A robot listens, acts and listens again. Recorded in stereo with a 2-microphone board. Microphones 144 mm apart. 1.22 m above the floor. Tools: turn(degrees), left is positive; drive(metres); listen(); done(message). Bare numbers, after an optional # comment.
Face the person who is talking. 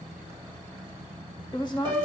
# The woman speaking: about 30° left or 150° left.
turn(30)
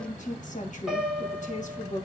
# So it is at 120° left.
turn(120)
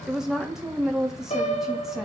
done("Facing the woman speaking, 1 to 2 m away.")